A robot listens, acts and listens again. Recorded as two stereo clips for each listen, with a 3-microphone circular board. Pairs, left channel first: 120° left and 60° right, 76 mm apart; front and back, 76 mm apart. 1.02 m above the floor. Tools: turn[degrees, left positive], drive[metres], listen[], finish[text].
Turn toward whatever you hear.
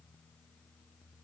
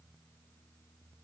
Action: listen[]
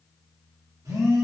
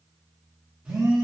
Thought: The phone buzzing: 105° right.
Action: turn[-105]
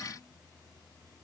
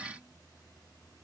Action: listen[]
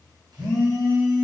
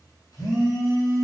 Thought: The phone buzzing is now 40° right.
Action: turn[-40]
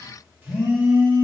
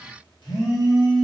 Action: finish[Found it: a phone buzzing, straight ahead.]